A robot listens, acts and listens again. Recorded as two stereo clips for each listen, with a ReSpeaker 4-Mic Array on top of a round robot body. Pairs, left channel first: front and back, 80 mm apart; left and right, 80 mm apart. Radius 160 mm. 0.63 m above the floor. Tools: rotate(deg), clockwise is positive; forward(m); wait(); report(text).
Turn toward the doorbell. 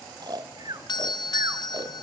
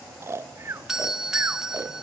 report("Found it: a doorbell, straight ahead, 1 to 2 m away.")